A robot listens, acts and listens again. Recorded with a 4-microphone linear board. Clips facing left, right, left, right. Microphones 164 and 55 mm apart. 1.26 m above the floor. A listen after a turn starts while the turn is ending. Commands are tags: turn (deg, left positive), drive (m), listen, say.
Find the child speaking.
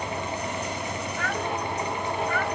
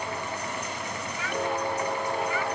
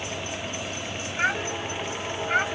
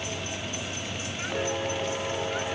<turn deg="60"/>
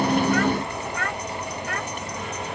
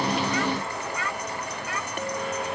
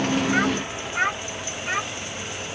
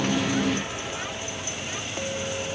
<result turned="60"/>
<turn deg="55"/>
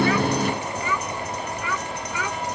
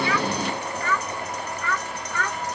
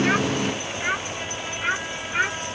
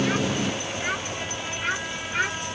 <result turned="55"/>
<turn deg="10"/>
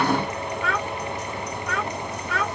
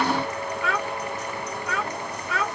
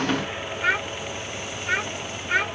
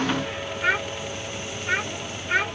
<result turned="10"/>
<say>Found it: a child speaking, straight ahead.</say>